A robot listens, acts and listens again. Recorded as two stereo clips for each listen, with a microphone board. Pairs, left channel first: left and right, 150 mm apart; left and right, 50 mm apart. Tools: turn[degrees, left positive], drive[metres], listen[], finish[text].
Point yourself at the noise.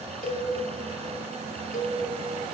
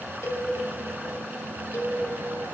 Thought: The cowbell: about 70° left or 110° left.
Action: turn[70]
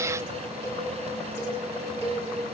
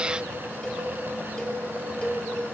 Thought: So it is at 20° left.
Action: turn[20]
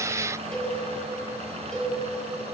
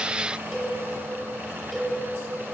Action: finish[Facing the cowbell.]